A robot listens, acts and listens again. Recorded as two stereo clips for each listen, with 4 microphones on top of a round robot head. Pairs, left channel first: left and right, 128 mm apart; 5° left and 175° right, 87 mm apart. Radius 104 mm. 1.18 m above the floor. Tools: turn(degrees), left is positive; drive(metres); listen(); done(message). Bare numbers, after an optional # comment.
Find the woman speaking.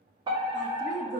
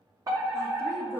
# The woman speaking: 90° right.
turn(-90)
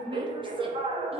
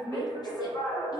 # The woman speaking is now 35° right.
turn(-35)
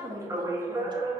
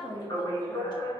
# The woman speaking is now 30° right.
turn(-30)
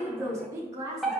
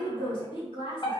# The woman speaking is now 25° right.
turn(-25)
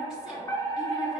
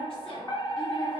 listen()
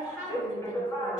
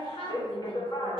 done("Found it: a woman speaking, straight ahead.")